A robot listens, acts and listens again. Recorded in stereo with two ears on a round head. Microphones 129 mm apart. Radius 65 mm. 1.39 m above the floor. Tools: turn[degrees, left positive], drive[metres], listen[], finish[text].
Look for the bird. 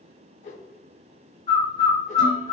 Thought: The bird: about 25° left or 155° left.
Action: turn[25]
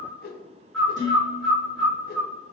Action: finish[Found it: a bird, straight ahead, under 1 m away.]